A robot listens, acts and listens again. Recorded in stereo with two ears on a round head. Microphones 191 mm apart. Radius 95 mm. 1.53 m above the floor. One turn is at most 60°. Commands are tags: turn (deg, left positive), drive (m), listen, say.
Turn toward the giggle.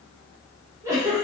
<turn deg="-30"/>
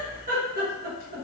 <turn deg="-60"/>
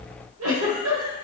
<turn deg="-60"/>
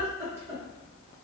<turn deg="-10"/>
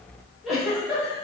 <say>Facing the giggle.</say>